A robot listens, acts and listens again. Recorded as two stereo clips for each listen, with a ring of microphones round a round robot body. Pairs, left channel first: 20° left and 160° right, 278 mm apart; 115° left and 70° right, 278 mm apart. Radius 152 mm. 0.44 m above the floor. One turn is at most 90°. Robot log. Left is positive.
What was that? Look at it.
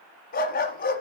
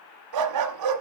note: The dog barking: 40° right.
cmd yaw -40
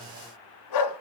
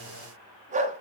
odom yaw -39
end: Facing the dog barking, 1 to 2 m away.